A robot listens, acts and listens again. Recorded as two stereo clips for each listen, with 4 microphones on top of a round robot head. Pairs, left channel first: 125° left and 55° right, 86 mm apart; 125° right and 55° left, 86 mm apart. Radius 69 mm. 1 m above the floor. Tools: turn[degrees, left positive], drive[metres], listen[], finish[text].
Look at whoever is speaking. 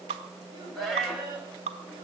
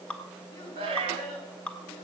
Thought: The child speaking: 95° right.
Action: turn[-95]
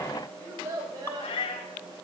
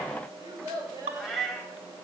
Action: finish[Facing the child speaking.]